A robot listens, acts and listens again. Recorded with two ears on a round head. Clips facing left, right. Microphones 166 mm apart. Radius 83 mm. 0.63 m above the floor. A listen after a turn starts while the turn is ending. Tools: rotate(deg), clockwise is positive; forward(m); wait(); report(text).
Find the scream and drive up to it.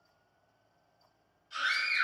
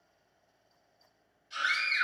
rotate(15)
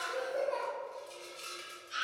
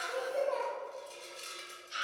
forward(1.0)
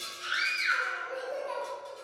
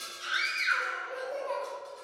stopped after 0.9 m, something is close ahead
report("Arrived at the scream, straight ahead.")